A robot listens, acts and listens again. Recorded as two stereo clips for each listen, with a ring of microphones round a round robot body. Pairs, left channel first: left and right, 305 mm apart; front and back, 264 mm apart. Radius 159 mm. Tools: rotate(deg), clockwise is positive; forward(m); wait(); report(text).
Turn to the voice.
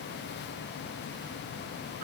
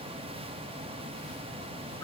wait()
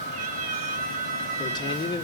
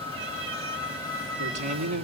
rotate(-165)
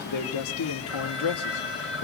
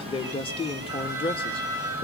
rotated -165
rotate(-70)
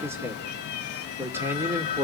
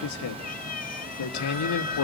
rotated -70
rotate(10)
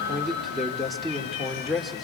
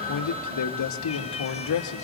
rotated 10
report("Facing the man speaking.")